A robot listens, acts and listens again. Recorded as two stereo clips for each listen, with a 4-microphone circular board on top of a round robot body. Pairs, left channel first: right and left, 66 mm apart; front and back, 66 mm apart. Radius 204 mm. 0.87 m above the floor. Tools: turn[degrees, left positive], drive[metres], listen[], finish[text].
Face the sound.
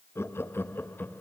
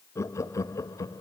Thought: The laughter: 30° right.
Action: turn[-30]
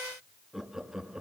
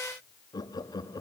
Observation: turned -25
Thought: The laughter is now 10° left.
Action: turn[10]
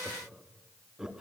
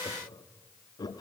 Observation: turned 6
Thought: The laughter is now 10° left.
Action: turn[10]
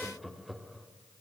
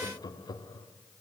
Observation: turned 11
Action: finish[Found it: laughter, straight ahead, 2 to 4 m away.]